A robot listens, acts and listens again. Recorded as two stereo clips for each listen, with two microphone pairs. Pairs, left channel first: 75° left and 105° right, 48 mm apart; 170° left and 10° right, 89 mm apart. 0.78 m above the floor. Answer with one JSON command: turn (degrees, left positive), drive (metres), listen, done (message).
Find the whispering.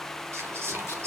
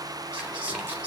{"turn": -85}
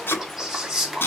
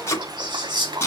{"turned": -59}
{"turn": -25}
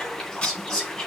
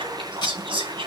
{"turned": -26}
{"done": "Facing the whispering, 2 to 4 m away."}